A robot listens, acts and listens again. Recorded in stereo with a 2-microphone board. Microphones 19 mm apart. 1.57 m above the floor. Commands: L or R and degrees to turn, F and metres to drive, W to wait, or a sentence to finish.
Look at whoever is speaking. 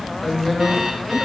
L30
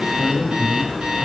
R15
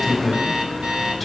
Found it: a woman speaking, straight ahead.